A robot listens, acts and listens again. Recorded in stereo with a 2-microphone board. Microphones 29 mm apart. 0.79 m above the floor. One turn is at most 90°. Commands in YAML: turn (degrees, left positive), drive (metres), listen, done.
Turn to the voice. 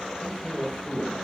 turn: 40
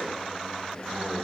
listen: true
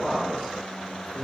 done: "Facing the man speaking, over 4 m away."